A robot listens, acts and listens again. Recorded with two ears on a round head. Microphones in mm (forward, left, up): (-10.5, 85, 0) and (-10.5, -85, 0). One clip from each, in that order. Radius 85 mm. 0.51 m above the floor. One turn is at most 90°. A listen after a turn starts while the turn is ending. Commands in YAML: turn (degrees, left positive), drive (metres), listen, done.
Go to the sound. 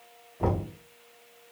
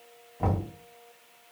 turn: -30
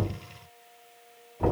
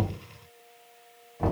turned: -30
turn: -90
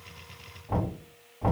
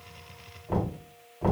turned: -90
turn: -45
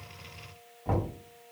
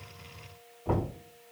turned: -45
turn: 10
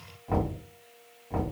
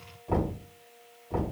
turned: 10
drive: 1.0
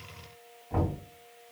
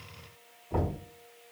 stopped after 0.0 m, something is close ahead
done: "Something is in my way. I am facing the knocking but have not reached it."